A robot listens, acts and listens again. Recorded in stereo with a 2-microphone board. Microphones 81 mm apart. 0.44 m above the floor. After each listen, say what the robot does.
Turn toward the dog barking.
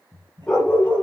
Turn 30° left.
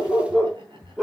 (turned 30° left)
Found it: a dog barking, straight ahead, 2 to 4 m away.